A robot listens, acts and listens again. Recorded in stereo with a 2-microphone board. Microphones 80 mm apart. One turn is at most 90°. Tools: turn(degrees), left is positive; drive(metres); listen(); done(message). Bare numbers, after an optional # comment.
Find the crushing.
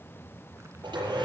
listen()
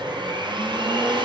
listen()
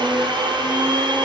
done("I can't make out crushing, only a blender.")